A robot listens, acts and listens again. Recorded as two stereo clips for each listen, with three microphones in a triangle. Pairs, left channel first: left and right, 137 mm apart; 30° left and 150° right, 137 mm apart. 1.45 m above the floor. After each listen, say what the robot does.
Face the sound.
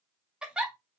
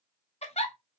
Facing the giggle.